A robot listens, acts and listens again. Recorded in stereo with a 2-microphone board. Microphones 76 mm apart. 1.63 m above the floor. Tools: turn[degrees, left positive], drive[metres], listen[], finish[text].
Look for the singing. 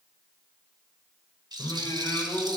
Thought: The singing: about 60° left or 120° left.
Action: turn[60]
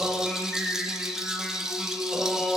Action: finish[Found it: singing, straight ahead, over 4 m away.]